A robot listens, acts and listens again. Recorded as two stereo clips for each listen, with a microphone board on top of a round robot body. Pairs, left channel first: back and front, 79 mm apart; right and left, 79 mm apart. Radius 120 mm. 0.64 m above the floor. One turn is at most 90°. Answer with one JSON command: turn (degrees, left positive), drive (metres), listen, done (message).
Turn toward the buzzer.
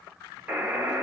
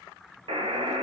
{"turn": 80}
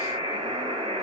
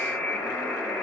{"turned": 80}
{"done": "Found it: a buzzer, straight ahead, under 1 m away."}